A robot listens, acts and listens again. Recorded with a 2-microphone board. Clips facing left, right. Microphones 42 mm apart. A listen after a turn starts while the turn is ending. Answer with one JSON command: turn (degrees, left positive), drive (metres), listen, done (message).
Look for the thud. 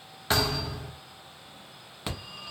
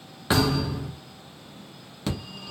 {"turn": -30}
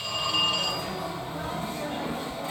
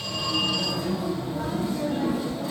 {"listen": true}
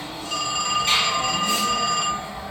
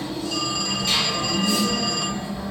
{"done": "I heard a thud, but can't make it out now. It was about 15° left or 135° right."}